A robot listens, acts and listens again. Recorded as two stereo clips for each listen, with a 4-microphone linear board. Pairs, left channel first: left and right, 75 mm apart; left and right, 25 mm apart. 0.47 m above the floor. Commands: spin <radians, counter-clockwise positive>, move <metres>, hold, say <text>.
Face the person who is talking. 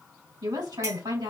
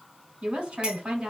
spin -1.13
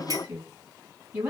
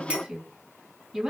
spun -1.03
spin -0.35
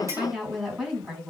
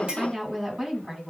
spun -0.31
say Facing the woman speaking, 2 to 4 m away.